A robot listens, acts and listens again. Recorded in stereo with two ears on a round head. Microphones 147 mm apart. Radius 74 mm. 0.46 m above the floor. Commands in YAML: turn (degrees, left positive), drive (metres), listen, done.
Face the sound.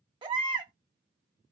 turn: -30
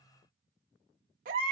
turn: -115
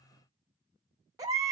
turn: -20
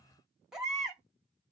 done: "Found it: a baby crying, straight ahead."